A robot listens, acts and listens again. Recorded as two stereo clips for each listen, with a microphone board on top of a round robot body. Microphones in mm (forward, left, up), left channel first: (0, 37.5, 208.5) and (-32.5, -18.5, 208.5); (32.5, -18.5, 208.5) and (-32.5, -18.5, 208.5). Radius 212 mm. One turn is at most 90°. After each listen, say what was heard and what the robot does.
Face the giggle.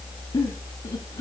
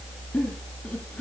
The giggle: 70° left. Turn 70° left.
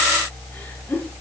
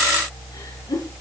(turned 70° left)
Found it: a giggle, straight ahead.